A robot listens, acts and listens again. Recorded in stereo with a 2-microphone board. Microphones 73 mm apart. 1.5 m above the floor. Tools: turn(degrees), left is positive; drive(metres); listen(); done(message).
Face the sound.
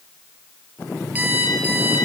turn(degrees=-25)
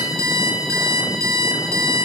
turn(degrees=-130)
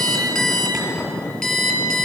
done("Found it: an alarm clock, straight ahead, over 4 m away.")